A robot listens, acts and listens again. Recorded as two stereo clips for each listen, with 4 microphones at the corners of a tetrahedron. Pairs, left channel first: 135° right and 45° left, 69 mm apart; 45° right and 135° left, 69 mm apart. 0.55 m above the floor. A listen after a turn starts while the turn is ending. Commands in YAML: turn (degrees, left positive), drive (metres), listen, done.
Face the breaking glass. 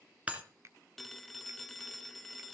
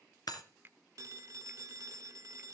turn: -25
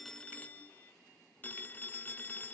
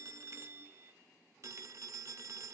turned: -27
done: "Facing where the breaking glass came from. I can't hear it now."